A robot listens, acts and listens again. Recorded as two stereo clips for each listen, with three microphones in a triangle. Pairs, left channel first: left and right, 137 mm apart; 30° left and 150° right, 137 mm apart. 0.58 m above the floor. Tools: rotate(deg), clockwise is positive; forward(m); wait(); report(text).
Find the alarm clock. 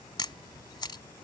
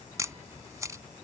wait()
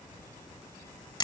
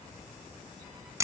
wait()
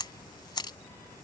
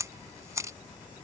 report("I can't make out an alarm clock to turn to.")